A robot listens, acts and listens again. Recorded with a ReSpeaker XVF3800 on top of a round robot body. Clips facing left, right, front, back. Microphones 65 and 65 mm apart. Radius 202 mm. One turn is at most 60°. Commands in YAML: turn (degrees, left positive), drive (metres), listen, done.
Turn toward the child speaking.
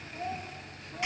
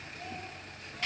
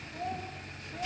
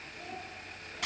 turn: 40
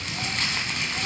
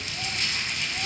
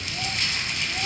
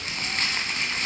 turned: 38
listen: true
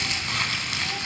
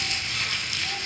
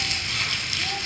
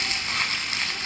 listen: true
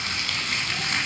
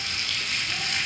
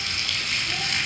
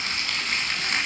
done: "Facing where the child speaking came from. I can't hear it now."